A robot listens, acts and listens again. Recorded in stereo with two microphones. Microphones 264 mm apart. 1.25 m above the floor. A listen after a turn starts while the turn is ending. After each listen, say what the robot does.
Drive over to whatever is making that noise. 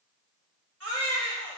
Turn 60° right.
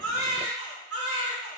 Turn 60° right.
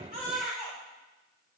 Drive 1.0 m forward.
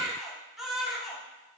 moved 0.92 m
Drive 1.0 m forward.
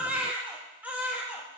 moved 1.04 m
Drive 1.0 m forward.
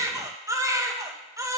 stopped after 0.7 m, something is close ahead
Turn 10° right.
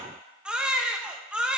I am next to the baby crying.